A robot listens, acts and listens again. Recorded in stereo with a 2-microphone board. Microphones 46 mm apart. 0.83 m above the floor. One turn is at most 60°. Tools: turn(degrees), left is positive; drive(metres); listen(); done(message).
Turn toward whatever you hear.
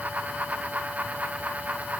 listen()
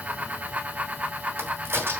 turn(degrees=-60)
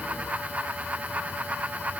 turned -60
listen()
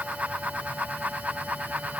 done("I heard a crack, but can't make it out now. It was about 5° right or 55° right.")